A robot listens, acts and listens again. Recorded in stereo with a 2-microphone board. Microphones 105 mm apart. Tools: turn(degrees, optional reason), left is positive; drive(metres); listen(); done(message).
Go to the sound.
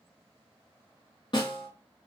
turn(degrees=50, reason="The snare drum: about 50° left or 130° left.")
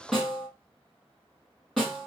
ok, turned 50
drive(metres=1.0)
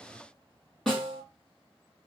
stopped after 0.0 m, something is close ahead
done("Blocked. The snare drum is further on, straight ahead.")